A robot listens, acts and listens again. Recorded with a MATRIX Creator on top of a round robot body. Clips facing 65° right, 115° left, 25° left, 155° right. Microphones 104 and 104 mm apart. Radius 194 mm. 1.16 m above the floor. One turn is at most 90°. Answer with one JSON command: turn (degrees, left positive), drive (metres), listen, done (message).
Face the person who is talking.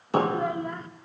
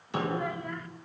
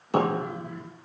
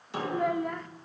{"turn": -90}
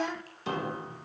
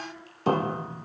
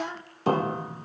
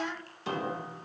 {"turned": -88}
{"turn": -45}
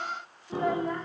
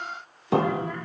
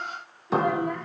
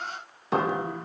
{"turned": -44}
{"listen": true}
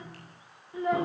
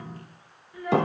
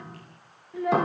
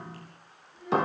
{"done": "Facing the child speaking, 1 to 2 m away."}